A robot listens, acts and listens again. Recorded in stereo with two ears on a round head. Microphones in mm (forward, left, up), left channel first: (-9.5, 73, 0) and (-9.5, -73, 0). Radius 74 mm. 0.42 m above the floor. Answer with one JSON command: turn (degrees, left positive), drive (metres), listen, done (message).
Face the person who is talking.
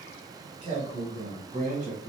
{"turn": -50}
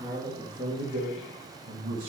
{"turn": -55}
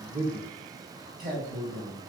{"turn": -30}
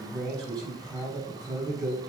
{"done": "Found it: a man speaking, straight ahead."}